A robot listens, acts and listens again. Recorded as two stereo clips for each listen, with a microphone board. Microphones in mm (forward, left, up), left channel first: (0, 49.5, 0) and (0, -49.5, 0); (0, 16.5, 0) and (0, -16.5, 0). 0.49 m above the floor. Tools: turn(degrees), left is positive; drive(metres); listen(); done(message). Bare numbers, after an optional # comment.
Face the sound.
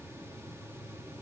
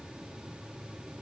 listen()
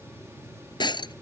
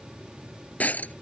# The breaking glass: about 45° left or 135° left.
turn(45)
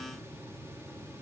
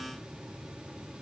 listen()
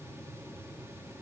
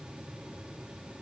done("I heard breaking glass, but can't make it out now. It was about straight ahead or 90° left.")